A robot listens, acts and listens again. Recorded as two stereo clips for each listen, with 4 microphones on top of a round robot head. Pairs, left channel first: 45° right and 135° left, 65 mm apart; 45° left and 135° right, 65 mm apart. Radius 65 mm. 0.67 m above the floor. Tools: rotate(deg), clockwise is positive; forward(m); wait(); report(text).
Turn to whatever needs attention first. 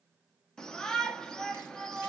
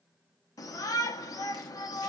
rotate(-35)
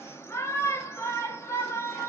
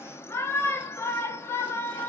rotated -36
report("Facing the shout, 1 to 2 m away.")